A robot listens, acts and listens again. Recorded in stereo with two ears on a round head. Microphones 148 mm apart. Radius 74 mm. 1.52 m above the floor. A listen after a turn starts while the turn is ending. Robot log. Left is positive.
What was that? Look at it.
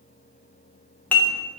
cmd yaw +30
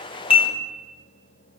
note: So it is at 140° left.
cmd yaw +140
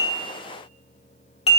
note: The dishes clattering is now 40° left.
cmd yaw +40
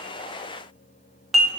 end: Facing the dishes clattering.